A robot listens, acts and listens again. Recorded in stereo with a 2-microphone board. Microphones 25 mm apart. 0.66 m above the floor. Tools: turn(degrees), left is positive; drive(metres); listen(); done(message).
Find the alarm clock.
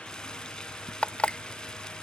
turn(degrees=60)
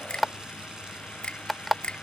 done("Found it: an alarm clock, straight ahead.")